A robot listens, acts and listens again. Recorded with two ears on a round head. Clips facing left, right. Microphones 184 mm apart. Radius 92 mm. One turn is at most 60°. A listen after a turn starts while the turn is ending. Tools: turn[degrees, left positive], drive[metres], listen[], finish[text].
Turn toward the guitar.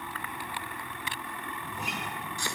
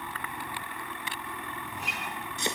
Action: turn[60]
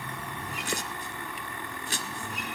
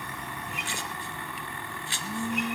Thought: Nothing new. It was at 30° left.
Action: turn[30]
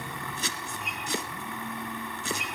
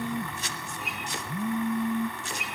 Action: finish[Facing the guitar, over 4 m away.]